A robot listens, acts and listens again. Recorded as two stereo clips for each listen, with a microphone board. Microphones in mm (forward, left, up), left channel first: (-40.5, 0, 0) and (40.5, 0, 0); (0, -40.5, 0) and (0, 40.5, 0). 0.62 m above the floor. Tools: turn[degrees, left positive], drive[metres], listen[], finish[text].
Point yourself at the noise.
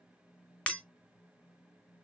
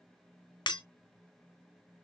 Thought: The breaking glass: 105° right.
Action: turn[-105]
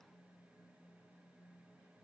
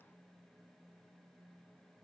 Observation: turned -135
Thought: Nothing new. It was at 30° left.
Action: turn[30]
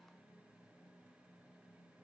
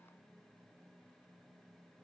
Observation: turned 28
Action: finish[I heard breaking glass from this way, but can't make it out now.]